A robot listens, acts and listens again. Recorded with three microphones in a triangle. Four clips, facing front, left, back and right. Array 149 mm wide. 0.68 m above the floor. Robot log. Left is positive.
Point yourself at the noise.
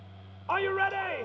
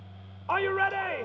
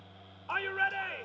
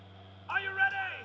note: The shout: 60° left.
cmd yaw +60
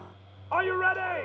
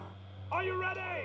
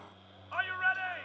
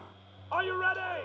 note: The shout is now 15° right.
cmd yaw -15
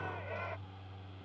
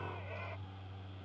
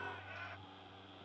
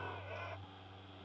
cmd idle
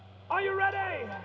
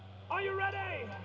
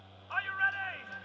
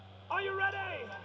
end: Facing the shout.